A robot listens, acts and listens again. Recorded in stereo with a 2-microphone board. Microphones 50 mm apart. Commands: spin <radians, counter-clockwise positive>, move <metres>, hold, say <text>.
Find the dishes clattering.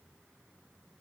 hold
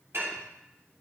spin -0.96
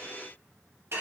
spin -1.13
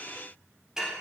spin -0.17
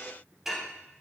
say Facing the dishes clattering, 2 to 4 m away.